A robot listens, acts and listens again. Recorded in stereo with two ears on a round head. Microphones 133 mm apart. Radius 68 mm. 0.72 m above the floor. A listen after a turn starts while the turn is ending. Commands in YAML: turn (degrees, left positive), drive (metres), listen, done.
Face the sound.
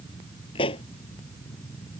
turn: 35
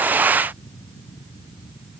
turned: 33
listen: true
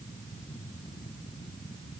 done: "I heard a pop, but can't make it out now. It was about straight ahead or 115° left."